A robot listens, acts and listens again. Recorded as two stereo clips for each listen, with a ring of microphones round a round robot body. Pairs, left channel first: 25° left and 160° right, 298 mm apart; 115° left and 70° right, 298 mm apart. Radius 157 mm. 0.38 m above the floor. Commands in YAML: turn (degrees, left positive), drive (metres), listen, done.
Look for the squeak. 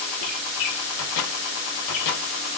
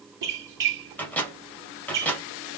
turn: -15
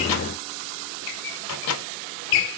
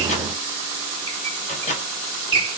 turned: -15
done: "Facing the squeak."